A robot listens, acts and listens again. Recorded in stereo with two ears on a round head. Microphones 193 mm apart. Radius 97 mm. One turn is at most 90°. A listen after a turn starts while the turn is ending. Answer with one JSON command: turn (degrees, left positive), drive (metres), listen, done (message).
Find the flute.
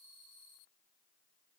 {"listen": true}
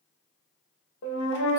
{"turn": 55}
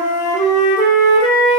{"turn": 25}
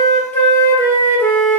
{"turn": 10}
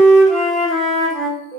{"done": "Found it: a flute, straight ahead."}